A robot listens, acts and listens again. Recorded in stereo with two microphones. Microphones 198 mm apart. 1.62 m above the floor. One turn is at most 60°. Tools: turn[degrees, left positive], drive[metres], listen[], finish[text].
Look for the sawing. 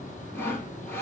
Action: turn[30]
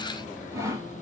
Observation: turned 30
Thought: So it is at 15° right.
Action: turn[-15]
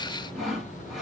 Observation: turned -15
Action: finish[Facing the sawing.]